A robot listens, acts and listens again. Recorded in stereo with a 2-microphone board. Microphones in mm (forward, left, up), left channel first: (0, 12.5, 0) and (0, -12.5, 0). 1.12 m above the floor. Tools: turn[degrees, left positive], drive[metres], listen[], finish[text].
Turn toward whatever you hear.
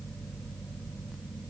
Action: listen[]
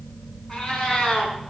Thought: The cat meowing: about 35° left or 145° left.
Action: turn[35]
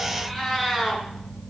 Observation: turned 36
Action: finish[Facing the cat meowing, over 4 m away.]